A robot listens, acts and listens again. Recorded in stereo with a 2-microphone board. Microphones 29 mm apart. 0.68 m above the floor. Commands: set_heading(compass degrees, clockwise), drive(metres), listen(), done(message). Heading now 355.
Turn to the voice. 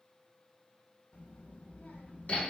set_heading(280)
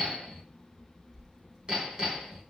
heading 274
set_heading(289)
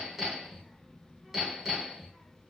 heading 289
done("Facing the child speaking.")